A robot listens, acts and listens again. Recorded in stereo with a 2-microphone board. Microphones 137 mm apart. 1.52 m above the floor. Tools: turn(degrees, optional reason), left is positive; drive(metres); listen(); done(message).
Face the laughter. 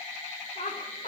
turn(degrees=65, reason="The laughter: about 65° left or 115° left.")
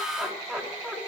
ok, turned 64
done("Facing the laughter, 2 to 4 m away.")